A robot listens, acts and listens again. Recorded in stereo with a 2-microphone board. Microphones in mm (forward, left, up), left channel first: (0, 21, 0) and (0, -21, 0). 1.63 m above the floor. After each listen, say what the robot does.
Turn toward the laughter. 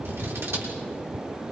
Keep listening.
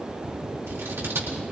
Keep listening.
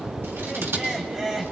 Turn 15° right.
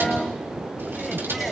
Keep listening.
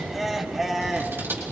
Turn 30° right.
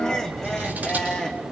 Turn 15° left.
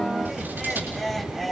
Found it: laughter, straight ahead, 2 to 4 m away.